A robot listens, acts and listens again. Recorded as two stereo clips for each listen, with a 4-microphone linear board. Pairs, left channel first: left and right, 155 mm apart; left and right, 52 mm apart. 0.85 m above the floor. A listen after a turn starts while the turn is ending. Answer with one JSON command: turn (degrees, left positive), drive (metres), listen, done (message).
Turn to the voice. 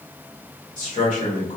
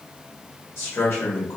{"turn": 55}
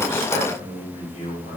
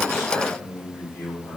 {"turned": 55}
{"turn": 60}
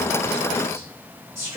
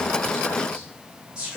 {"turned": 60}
{"turn": -20}
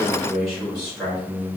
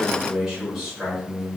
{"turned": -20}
{"done": "Facing the man speaking."}